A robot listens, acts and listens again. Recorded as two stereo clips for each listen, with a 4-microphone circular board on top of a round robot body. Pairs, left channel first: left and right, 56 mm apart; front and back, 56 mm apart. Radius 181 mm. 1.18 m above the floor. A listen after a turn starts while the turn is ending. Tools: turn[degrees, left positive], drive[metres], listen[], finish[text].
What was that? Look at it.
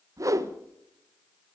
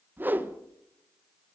Thought: The whoosh: 120° right.
Action: turn[-120]
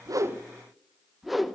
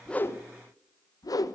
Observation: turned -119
Action: finish[Found it: a whoosh, straight ahead, 1 to 2 m away.]